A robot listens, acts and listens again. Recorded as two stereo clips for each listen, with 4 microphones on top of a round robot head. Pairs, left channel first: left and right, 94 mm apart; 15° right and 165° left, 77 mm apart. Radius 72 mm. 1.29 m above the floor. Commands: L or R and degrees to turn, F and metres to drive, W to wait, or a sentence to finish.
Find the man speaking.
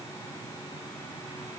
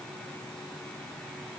W
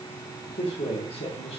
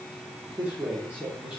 L90
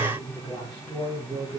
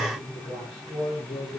R15
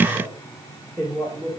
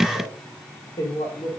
R15
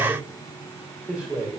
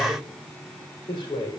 Found it: a man speaking, straight ahead, over 4 m away.